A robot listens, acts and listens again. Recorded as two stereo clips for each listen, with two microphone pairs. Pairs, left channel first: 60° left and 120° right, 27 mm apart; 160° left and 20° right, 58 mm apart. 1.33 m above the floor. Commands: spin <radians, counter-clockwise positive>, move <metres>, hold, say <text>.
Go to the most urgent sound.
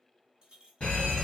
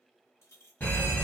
spin 2.01
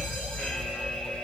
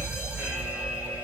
spin 0.96
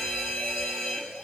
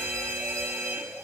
spin -0.26
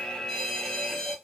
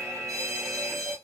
move 1.0
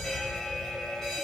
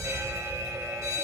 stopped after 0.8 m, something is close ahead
say Arrived at the fire alarm, straight ahead.